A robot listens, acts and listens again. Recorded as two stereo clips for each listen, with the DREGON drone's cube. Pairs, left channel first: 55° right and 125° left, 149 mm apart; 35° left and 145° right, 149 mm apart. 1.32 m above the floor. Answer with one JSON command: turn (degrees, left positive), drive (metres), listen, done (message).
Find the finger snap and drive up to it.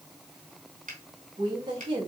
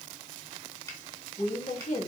{"turn": 100}
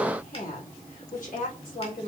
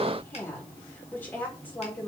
{"listen": true}
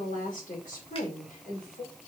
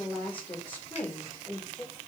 {"listen": true}
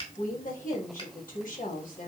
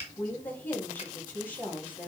{"drive": 1.0}
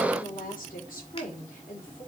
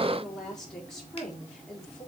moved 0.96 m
{"listen": true}
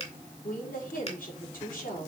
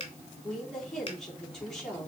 {"turn": -15}
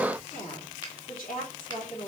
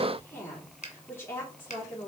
{"drive": 1.0}
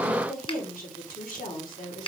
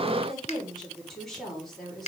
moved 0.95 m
{"drive": 1.0}
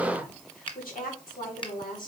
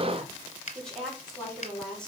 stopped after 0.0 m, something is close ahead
{"done": "Arrived at the finger snap, straight ahead."}